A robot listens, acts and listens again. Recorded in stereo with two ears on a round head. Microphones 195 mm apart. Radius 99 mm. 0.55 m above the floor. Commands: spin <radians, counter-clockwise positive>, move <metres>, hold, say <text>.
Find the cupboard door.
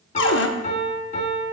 spin 1.05
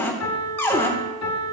spin 0.17
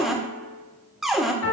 say Facing the cupboard door.